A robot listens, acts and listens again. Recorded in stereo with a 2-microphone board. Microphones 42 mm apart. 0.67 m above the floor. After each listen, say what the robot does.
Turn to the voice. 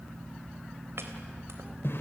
Keep listening.
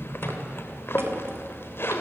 Keep listening.
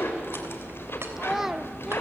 Turn 30° right.
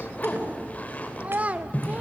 Turn 140° right.
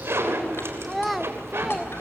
Facing the child speaking, 1 to 2 m away.